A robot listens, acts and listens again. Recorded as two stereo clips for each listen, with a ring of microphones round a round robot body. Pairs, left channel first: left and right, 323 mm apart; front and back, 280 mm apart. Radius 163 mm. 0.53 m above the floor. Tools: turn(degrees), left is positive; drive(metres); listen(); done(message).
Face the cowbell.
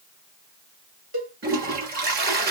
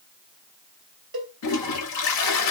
turn(degrees=-135)
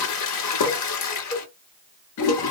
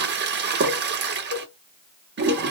turn(degrees=15)
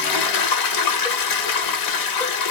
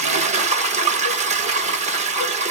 listen()
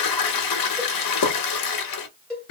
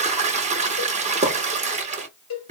done("Facing the cowbell.")